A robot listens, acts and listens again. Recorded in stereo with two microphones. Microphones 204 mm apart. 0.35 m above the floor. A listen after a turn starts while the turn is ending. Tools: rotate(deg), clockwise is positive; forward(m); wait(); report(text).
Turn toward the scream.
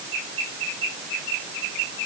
wait()
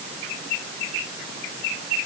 wait()
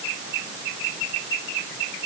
report("I can't make out a scream.")